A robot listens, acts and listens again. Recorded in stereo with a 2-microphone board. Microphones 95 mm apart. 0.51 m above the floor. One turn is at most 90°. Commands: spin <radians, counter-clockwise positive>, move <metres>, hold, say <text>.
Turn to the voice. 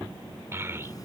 spin -0.44
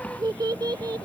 spin -1.57
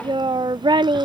spin -1.13
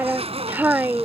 spin -0.35
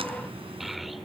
say Found it: a child speaking, straight ahead.